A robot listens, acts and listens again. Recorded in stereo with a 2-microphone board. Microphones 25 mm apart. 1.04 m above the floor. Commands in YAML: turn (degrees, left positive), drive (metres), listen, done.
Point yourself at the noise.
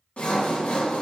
turn: 60
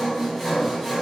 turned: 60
done: "Found it: sawing, straight ahead."